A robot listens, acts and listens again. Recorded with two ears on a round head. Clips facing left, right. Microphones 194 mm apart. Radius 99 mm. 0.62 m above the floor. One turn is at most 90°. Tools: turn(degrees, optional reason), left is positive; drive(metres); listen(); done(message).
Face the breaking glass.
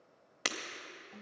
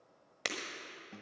turn(degrees=30)
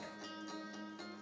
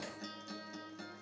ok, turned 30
listen()
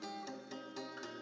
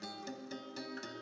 done("I heard breaking glass, but can't make it out now. It was about 25° right or 145° left.")